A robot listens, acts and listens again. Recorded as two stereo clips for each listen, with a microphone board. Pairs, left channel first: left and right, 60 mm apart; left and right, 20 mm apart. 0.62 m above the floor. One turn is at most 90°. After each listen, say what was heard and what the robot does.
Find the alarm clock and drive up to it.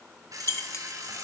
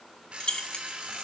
Turn 90° right.
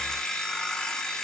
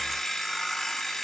So it is at 10° left. Turn 10° left.
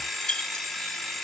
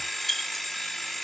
Drive 1.0 m forward.
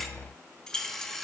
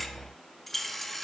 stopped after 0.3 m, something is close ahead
Blocked. The alarm clock is further on, straight ahead.